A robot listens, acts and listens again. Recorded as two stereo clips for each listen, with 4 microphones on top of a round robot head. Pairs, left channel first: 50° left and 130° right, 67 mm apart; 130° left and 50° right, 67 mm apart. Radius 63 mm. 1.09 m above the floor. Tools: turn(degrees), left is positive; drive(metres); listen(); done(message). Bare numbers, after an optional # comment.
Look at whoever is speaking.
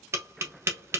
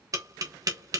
listen()
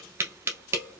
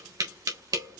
listen()
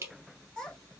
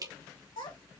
# The child speaking: 130° left.
turn(130)
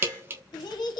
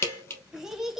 # The child speaking is now 35° left.
turn(35)
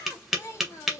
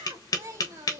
done("Found it: a child speaking, straight ahead.")